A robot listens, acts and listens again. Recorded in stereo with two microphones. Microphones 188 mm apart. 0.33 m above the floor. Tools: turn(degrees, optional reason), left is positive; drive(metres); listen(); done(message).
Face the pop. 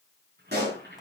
turn(degrees=-65, reason="The pop: about 65° right or 115° right.")
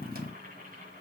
listen()
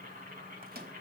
done("I heard a pop, but can't make it out now. It was about straight ahead or 50° right.")